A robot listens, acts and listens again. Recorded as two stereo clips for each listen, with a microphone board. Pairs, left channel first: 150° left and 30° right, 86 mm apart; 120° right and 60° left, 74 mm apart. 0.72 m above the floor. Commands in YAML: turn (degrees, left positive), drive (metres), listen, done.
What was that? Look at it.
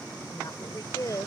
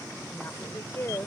turn: -165
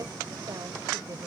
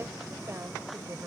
listen: true
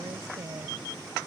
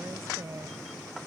turn: 15
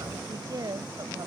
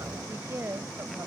turn: 10
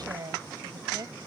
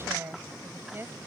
done: "Found it: a woman speaking, straight ahead."